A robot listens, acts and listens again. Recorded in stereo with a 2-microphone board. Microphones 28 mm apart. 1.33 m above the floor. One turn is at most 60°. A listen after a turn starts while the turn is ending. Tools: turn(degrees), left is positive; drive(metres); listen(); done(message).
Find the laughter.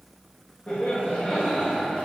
turn(degrees=55)
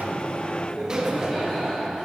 turn(degrees=55)
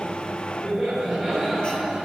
turn(degrees=-10)
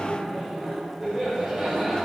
done("Facing the laughter.")